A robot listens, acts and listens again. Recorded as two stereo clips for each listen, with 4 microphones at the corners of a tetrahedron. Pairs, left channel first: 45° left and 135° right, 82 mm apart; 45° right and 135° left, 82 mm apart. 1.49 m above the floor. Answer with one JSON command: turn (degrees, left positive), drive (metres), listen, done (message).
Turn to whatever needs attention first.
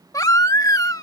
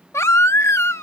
{"done": "Facing the baby crying."}